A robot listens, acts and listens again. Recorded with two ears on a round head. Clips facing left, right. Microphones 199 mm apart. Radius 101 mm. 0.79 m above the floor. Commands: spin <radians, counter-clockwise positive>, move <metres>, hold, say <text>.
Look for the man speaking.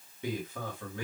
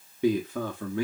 spin -0.96
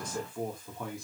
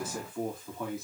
say Facing the man speaking, 2 to 4 m away.